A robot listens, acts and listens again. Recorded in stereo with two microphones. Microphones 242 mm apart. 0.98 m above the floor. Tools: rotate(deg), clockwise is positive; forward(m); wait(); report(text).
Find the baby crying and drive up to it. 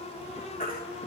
rotate(-40)
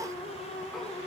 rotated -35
wait()
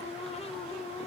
wait()
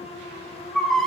forward(1.0)
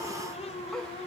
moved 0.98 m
wait()
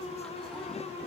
wait()
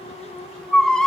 forward(1.0)
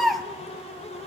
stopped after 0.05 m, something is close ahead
report("Arrived at the baby crying, straight ahead.")